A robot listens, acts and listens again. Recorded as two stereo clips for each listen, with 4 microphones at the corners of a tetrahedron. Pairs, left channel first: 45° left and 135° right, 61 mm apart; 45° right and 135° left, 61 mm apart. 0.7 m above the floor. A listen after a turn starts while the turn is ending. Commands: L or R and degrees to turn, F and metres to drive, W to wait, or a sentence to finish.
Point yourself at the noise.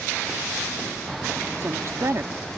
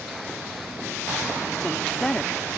R120
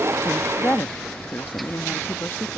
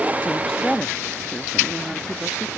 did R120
L70
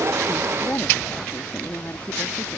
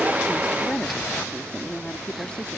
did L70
L20
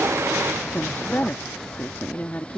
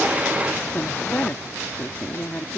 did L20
Facing the woman speaking.